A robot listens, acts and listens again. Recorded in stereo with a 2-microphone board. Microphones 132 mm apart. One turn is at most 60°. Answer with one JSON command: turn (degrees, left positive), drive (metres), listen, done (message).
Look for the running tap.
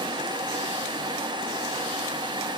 {"listen": true}
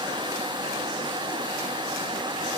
{"listen": true}
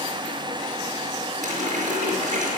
{"turn": -60}
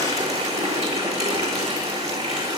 {"turn": -55}
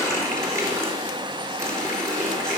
{"turn": -20}
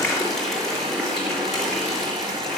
{"done": "Found it: a running tap, straight ahead, over 4 m away."}